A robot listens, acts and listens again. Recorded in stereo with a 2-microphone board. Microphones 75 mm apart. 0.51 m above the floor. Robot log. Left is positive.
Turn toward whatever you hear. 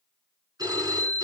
note: The phone ringing: about 60° right or 120° right.
cmd yaw -60
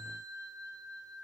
note: So it is at 60° right.
cmd yaw -60
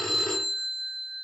end: Facing the phone ringing, over 4 m away.